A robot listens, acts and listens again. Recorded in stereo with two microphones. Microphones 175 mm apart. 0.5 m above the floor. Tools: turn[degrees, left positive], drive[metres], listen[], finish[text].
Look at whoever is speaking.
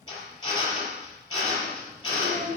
Thought: The child speaking: about 70° right or 110° right.
Action: turn[-70]
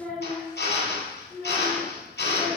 Action: finish[Facing the child speaking, over 4 m away.]